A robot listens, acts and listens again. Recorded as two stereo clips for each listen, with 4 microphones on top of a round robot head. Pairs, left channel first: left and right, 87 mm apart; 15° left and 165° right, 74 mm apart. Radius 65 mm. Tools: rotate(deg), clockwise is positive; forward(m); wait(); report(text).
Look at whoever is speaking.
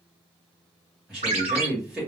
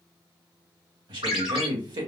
rotate(170)
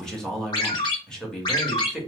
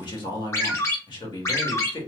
report("Facing the man speaking, 1 to 2 m away.")